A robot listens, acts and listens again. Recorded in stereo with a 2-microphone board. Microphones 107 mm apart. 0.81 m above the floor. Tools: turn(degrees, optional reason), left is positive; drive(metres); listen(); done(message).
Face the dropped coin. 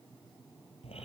listen()
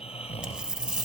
turn(degrees=-30)
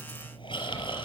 listen()
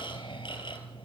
done("I heard a dropped coin, but can't make it out now. It was about 20° left or 140° right.")